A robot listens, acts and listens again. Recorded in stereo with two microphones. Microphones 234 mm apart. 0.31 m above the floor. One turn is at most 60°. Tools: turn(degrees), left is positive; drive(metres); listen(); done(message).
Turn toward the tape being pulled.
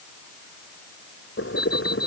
listen()
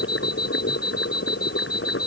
listen()
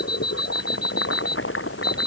done("I can't make out tape being pulled to turn to.")